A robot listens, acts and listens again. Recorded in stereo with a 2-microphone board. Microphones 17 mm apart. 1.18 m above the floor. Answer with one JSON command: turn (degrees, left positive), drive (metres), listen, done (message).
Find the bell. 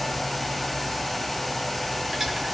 {"listen": true}
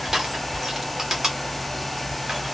{"listen": true}
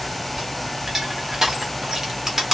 {"done": "I can't make out a bell, only crushing."}